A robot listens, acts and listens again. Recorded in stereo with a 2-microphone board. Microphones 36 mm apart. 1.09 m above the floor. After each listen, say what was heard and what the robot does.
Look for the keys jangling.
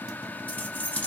The keys jangling: about 50° left or 130° left. Turn 50° left.
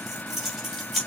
Facing the keys jangling, 2 to 4 m away.